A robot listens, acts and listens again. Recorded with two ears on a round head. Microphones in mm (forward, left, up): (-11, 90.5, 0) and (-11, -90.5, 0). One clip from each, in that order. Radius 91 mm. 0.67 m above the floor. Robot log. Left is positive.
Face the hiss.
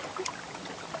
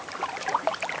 cmd idle
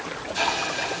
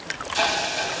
note: The hiss: about 40° right or 140° right.
cmd yaw -40
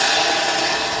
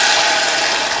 note: So it is at 95° right.
cmd yaw -95
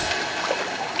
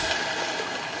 end: Facing the hiss, under 1 m away.